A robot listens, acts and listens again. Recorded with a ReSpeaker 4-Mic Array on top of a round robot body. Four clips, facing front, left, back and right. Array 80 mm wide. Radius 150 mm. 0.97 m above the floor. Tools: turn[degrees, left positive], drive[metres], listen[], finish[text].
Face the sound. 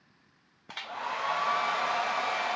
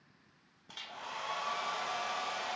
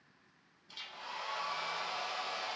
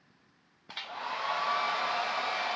Thought: The hair dryer: 25° right.
Action: turn[-25]
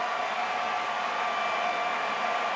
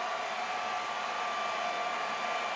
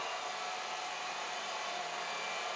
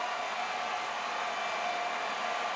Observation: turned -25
Action: finish[Found it: a hair dryer, straight ahead.]